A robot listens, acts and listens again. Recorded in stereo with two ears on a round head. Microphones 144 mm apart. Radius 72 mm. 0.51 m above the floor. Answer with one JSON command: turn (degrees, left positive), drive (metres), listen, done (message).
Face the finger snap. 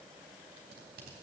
{"listen": true}
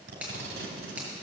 {"turn": -30}
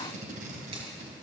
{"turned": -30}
{"listen": true}
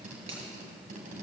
{"turn": -140}
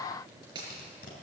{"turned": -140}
{"turn": -25}
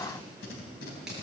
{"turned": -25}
{"listen": true}
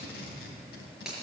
{"done": "Facing the finger snap, over 4 m away."}